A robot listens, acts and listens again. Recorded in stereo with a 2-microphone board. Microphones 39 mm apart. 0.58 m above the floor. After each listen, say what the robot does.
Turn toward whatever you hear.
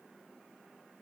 Keep listening.
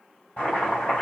Turn 25° left.
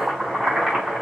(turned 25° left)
Found it: chopping, straight ahead.